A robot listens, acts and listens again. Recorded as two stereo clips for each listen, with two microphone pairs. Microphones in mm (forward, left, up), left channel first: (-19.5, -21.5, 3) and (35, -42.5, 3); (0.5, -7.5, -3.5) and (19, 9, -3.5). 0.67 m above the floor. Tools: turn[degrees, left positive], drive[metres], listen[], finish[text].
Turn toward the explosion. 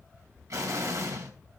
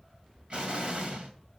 Action: finish[Found it: an explosion, straight ahead.]